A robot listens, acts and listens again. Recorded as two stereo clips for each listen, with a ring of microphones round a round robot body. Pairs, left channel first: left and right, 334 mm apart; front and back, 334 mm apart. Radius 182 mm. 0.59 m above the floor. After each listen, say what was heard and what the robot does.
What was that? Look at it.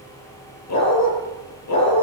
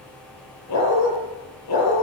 The dog barking: 50° left. Turn 50° left.
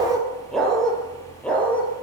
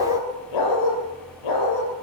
Facing the dog barking.